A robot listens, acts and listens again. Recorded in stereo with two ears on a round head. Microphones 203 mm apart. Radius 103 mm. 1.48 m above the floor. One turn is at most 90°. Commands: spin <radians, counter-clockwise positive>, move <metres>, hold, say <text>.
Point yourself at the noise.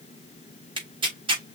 spin -0.35
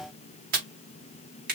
spin -1.57
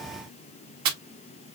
spin -1.31
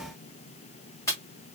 spin 0.17
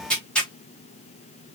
say Found it: tearing paper, straight ahead.